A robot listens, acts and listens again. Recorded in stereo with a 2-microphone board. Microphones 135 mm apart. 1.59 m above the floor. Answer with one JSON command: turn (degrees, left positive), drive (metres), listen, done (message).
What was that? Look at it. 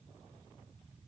{"listen": true}
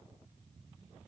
{"listen": true}
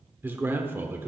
{"turn": -15}
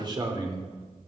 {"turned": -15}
{"turn": -150}
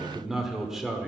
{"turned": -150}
{"done": "Facing the man speaking, 1 to 2 m away."}